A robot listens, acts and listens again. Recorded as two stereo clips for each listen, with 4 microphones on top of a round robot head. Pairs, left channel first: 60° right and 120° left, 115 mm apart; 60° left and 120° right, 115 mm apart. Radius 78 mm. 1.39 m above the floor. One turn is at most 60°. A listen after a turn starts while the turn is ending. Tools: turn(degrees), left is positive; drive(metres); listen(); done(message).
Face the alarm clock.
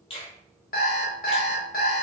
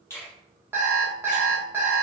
turn(degrees=-45)
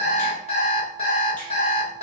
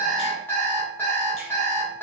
turn(degrees=-15)
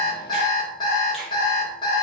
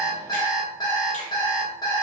done("Facing the alarm clock, 1 to 2 m away.")